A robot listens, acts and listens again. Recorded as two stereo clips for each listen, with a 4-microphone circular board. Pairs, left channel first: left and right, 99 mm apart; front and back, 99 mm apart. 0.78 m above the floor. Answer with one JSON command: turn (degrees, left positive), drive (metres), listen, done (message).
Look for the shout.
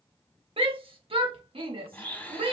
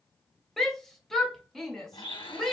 {"turn": -85}
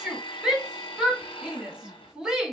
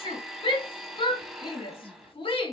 {"turn": -10}
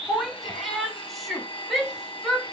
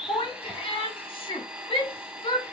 {"done": "Facing the shout, 1 to 2 m away."}